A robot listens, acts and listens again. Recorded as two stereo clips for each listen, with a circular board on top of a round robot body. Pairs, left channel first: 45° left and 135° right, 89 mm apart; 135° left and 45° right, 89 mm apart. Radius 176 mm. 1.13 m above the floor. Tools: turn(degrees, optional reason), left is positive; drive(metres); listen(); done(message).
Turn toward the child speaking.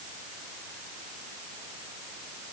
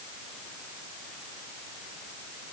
listen()
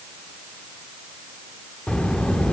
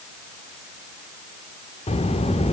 turn(degrees=125, reason="The child speaking: 125° left.")
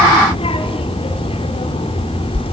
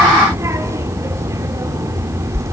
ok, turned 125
turn(degrees=15, reason="The child speaking is now 15° left.")
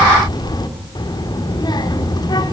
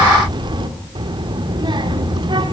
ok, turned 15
done("Found it: a child speaking, straight ahead.")